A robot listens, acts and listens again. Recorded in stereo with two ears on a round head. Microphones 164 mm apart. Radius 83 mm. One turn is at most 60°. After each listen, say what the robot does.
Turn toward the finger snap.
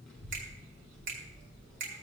Turn 50° right.
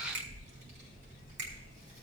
Turn 60° right.
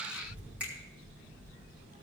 Turn 10° right.
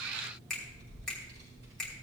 Facing the finger snap, 2 to 4 m away.